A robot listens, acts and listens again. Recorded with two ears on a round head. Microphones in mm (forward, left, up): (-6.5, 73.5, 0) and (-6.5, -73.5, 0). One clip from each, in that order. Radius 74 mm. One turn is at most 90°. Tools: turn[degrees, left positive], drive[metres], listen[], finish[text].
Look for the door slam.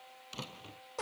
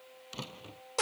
Action: turn[30]
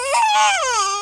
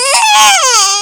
Action: listen[]
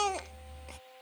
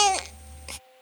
Action: finish[I heard a door slam, but can't make it out now. It was about 20° right or 140° left.]